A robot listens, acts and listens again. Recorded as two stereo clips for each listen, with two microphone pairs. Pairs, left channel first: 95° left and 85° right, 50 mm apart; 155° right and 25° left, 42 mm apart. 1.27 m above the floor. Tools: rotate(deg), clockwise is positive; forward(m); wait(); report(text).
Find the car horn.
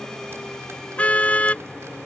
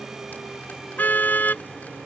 rotate(-160)
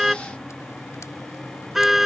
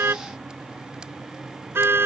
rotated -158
report("Found it: a car horn, straight ahead.")